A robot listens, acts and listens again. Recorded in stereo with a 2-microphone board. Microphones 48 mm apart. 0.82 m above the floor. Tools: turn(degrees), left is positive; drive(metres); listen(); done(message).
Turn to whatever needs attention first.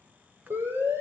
turn(degrees=-90)
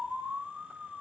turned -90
done("Found it: a siren, straight ahead, over 4 m away.")